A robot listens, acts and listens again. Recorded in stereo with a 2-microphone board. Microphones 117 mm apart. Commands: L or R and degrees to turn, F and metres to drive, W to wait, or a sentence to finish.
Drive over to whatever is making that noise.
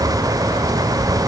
W
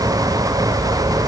W
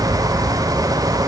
I can't make out anything to turn to.